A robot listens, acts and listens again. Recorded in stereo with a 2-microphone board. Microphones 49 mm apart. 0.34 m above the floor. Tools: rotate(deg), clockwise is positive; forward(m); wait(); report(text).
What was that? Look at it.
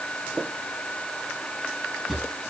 rotate(-30)
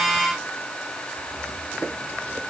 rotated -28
wait()
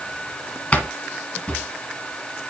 rotate(-150)
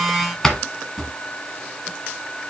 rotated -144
rotate(-10)
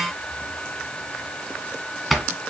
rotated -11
report("Found it: a drawer, straight ahead.")